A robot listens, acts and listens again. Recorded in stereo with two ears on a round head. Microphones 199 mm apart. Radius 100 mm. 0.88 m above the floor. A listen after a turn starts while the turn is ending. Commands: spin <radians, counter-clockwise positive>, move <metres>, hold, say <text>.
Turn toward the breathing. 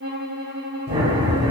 spin -0.44
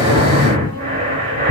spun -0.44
spin -2.18
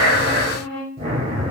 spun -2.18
spin -0.52
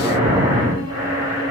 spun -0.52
spin -0.35
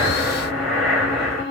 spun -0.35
say Facing the breathing, 1 to 2 m away.